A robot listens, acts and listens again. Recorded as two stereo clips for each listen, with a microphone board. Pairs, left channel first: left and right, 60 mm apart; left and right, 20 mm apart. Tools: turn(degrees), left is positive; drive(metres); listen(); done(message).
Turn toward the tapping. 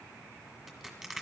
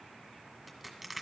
listen()
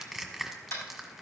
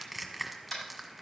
turn(degrees=40)
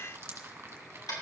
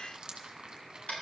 turn(degrees=100)
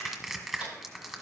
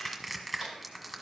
listen()
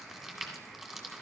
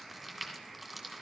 listen()
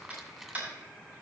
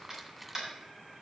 turn(degrees=-25)
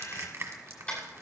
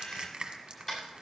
turn(degrees=15)
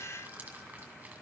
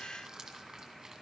listen()
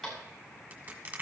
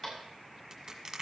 done("Found it: tapping, straight ahead.")